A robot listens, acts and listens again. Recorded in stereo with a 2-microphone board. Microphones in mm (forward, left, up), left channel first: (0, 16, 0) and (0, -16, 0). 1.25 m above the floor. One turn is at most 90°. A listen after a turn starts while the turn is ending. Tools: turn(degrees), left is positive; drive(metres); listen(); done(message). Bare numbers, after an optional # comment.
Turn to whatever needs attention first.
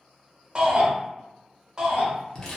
# The shout: about 30° right or 150° right.
turn(-30)
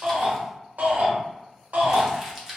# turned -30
# So it is at 125° right.
turn(-90)
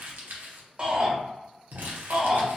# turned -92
# The shout is now 30° right.
turn(-30)
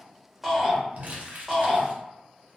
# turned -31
done("Found it: a shout, straight ahead.")